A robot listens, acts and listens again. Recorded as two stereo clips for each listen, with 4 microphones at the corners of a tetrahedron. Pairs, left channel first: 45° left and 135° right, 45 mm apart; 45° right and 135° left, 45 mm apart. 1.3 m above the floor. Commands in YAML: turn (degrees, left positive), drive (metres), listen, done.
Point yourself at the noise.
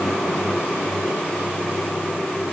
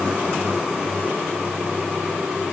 listen: true
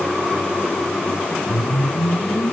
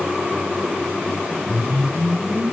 turn: 25
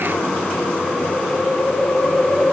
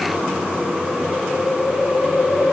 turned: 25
turn: -15
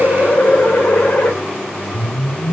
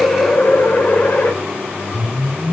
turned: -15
done: "Found it: a whoosh, straight ahead."